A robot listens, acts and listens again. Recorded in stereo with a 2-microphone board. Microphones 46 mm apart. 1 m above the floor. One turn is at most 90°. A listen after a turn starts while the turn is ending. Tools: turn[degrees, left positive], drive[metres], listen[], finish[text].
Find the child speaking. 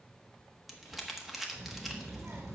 Thought: The child speaking: about 70° right or 110° right.
Action: turn[-70]
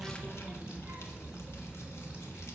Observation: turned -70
Thought: So it is at 30° right.
Action: turn[-30]
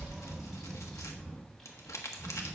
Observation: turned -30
Action: finish[Facing the child speaking.]